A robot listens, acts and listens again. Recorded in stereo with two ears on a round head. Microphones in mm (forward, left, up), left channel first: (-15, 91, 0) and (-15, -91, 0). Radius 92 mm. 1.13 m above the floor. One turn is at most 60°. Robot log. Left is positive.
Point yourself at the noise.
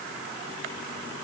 cmd idle
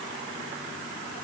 cmd idle
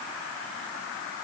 end: I can't make out anything to turn to.